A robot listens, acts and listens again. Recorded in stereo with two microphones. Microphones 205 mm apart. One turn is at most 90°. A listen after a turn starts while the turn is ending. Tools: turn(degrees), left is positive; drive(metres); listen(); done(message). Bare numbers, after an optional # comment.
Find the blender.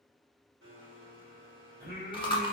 turn(-90)
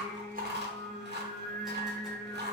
listen()
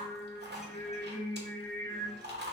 listen()
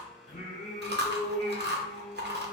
done("Facing the blender, 1 to 2 m away.")